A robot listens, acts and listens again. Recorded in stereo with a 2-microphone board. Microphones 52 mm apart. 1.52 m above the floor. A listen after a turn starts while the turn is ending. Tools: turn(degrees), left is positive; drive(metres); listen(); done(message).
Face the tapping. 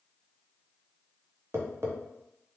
turn(degrees=-50)
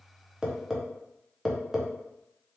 done("Facing the tapping, under 1 m away.")